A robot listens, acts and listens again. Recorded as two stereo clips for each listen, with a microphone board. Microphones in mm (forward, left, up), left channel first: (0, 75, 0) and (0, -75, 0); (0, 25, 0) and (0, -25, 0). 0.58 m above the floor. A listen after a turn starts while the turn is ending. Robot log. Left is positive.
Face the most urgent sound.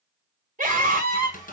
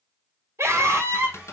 note: The scream: about 60° right or 120° right.
cmd yaw -60
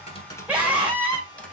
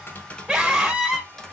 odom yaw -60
note: So it is at 10° right.
cmd yaw -10
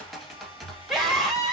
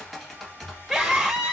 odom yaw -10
end: Facing the scream.